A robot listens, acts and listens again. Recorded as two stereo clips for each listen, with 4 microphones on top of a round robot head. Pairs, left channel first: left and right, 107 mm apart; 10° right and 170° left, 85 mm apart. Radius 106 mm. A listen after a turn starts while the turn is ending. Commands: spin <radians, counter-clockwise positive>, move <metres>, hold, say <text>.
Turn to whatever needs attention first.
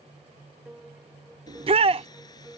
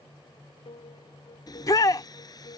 spin -1.05
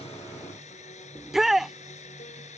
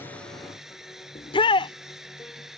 say Facing the shout.